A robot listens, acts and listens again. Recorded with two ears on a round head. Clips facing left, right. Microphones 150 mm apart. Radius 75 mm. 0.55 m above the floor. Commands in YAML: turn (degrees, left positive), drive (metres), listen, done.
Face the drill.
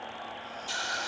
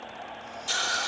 listen: true
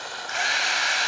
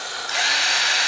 turn: -45
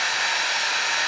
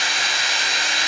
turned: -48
turn: -85
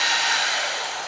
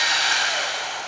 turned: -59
turn: -25
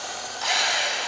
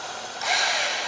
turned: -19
done: "Facing the drill, 2 to 4 m away."